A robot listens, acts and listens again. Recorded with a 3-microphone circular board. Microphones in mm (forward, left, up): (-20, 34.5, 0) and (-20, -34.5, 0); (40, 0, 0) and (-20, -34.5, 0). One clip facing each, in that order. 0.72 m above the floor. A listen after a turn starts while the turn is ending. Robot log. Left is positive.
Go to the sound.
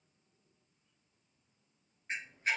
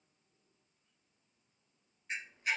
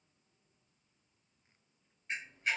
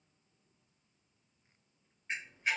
note: The camera shutter: 145° left.
cmd yaw +145
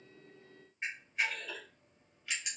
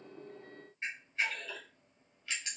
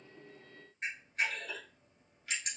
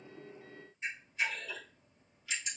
note: The camera shutter is now 15° left.
cmd yaw +15
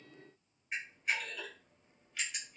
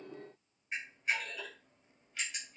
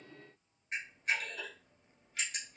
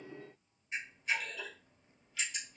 cmd fwd 1.0
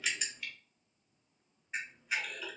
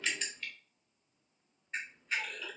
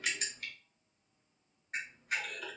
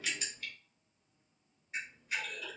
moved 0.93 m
note: The camera shutter is now 10° left.
cmd yaw +10
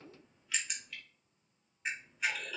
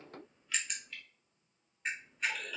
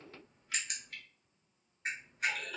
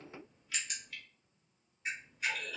cmd fwd 1.0
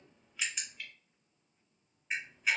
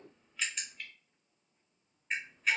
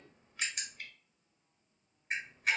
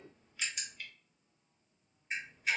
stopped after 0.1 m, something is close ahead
end: Arrived at the camera shutter, straight ahead.